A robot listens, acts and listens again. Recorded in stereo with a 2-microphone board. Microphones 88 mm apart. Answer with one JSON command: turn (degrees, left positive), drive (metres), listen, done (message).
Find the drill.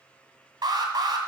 {"listen": true}
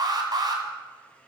{"listen": true}
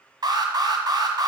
{"done": "I can't make out a drill to turn to."}